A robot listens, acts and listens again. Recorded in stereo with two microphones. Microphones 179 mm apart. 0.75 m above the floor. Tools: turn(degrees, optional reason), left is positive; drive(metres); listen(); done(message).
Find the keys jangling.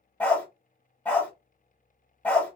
listen()
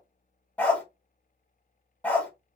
listen()
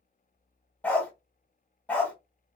done("I can't make out keys jangling to turn to.")